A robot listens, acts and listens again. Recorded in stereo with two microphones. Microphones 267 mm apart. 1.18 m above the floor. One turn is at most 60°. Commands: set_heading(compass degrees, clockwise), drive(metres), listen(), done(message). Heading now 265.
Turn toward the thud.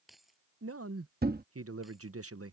set_heading(300)
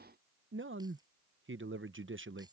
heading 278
listen()
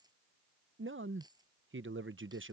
done("I heard a thud, but can't make it out now. It was about 25° right or 130° right.")